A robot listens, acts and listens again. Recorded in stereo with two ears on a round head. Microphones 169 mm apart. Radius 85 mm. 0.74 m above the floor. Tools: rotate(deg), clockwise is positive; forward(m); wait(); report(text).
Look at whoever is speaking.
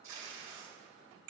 wait()
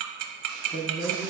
rotate(-40)
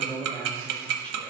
rotate(-10)
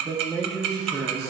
report("Facing the man speaking, 1 to 2 m away.")